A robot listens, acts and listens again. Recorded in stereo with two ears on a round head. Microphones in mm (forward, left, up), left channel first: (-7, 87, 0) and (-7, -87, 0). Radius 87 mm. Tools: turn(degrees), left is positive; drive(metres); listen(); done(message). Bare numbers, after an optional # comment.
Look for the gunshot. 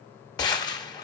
# The gunshot: about 20° left or 160° left.
turn(20)
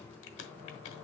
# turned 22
listen()
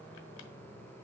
done("I heard a gunshot, but can't make it out now. It was about straight ahead or 135° left.")